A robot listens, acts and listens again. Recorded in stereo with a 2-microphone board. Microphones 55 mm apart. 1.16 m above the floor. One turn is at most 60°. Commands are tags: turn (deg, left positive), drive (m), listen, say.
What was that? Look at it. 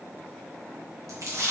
<turn deg="-60"/>
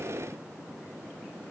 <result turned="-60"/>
<listen/>
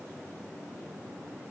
<say>I heard a splash, but can't make it out now. It was about 15° right or 45° right.</say>